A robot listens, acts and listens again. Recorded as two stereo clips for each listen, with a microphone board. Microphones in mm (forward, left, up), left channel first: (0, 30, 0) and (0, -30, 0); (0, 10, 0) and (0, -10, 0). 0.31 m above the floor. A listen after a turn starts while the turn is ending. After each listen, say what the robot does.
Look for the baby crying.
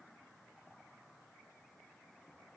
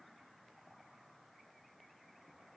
Keep listening.
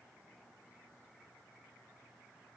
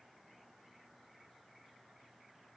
Keep listening.
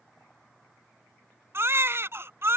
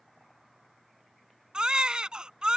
Turn 45° right.
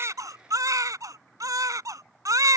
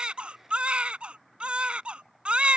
Turn 85° right.
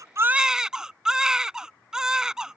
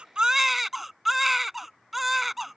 Turn 10° right.
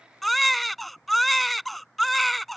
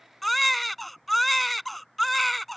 Found it: a baby crying, straight ahead.